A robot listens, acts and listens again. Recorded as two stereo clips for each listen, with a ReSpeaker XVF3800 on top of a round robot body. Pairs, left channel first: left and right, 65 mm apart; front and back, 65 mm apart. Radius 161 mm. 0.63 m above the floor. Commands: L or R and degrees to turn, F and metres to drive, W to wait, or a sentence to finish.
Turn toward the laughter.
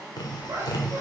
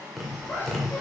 R55
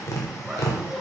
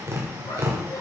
Facing the laughter, 2 to 4 m away.